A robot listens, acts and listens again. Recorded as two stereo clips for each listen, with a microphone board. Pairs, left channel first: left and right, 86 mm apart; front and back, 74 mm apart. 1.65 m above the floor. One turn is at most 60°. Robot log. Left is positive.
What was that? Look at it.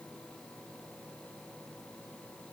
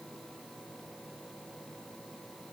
cmd idle
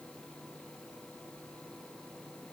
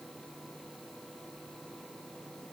cmd idle
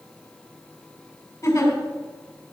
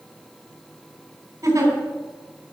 note: The giggle: 135° left.
cmd yaw +60
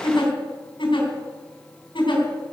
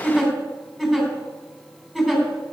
note: The giggle is now 90° left.
cmd yaw +60
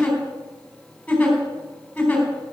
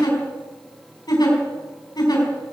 note: The giggle is now 15° left.
cmd yaw +15
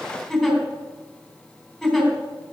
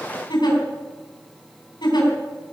end: Found it: a giggle, straight ahead, 2 to 4 m away.